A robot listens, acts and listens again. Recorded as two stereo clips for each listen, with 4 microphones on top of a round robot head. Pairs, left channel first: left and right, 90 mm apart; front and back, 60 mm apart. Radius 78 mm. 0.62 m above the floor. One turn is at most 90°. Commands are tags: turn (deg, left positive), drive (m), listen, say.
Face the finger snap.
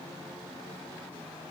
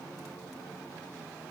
<listen/>
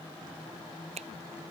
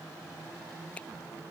<turn deg="-80"/>
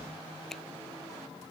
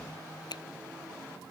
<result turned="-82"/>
<say>Found it: a finger snap, straight ahead.</say>